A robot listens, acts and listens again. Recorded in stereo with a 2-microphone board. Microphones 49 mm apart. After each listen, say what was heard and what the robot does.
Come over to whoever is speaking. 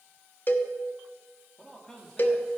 Turn 30° left.
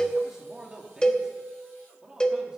So it is at 15° right. Turn 15° right.
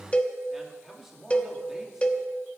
Drive 1.0 m forward.
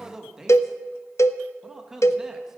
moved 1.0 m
The man speaking is now 10° right. Turn 10° right.
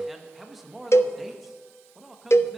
Drive 1.0 m forward.
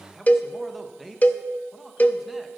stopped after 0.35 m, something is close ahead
Arrived at the man speaking, straight ahead.